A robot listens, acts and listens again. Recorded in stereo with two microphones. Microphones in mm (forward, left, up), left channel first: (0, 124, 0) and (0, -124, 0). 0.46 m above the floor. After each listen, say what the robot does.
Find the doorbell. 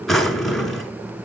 Keep listening.
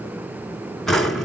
Keep listening.
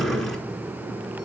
I can't make out a doorbell to turn to.